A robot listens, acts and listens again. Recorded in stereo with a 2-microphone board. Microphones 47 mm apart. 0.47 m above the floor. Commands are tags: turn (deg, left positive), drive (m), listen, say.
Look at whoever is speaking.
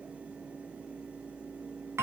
<listen/>
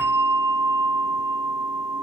<listen/>
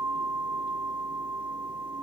<say>I can't make out anyone speaking to turn to.</say>